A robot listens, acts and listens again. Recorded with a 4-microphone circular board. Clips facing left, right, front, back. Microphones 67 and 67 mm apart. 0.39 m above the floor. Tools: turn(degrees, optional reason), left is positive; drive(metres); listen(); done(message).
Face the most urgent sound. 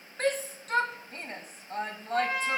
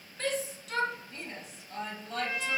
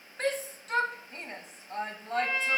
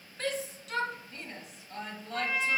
turn(degrees=50, reason="The shout: 50° left.")
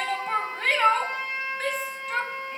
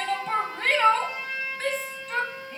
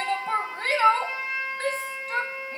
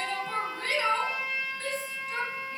done("Facing the shout, 2 to 4 m away.")